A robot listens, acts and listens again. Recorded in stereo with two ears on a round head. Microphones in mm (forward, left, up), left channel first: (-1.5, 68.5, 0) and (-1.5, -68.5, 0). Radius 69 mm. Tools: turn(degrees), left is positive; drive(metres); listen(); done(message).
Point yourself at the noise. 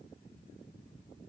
listen()
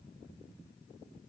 listen()
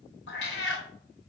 turn(degrees=90)
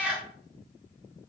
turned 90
done("Found it: a cat meowing, straight ahead, under 1 m away.")